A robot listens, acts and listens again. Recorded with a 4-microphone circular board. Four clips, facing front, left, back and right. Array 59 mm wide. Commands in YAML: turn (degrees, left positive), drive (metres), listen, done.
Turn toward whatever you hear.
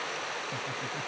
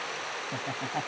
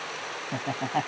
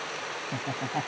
turn: 180
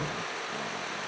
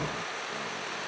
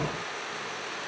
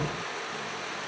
listen: true
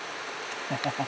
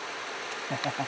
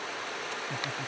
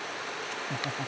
turn: 35
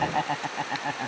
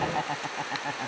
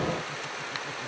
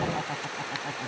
turn: 15
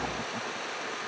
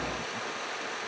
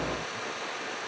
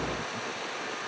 listen: true
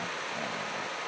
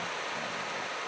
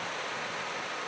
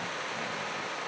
listen: true
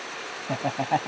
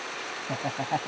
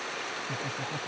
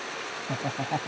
done: "Facing the laughter."